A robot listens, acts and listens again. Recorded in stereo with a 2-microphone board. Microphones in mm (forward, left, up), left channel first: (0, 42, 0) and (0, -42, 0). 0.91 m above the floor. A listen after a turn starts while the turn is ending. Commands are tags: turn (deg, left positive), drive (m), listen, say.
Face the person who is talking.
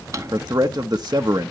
<turn deg="-55"/>
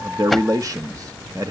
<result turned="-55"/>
<turn deg="-55"/>
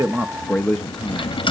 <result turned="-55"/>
<say>Facing the man speaking.</say>